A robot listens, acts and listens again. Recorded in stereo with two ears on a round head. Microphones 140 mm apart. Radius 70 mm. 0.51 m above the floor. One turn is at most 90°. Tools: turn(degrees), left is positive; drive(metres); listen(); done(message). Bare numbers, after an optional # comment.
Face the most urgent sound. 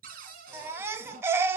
# The baby crying: about 15° right or 165° right.
turn(-15)
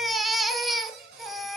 done("Facing the baby crying, under 1 m away.")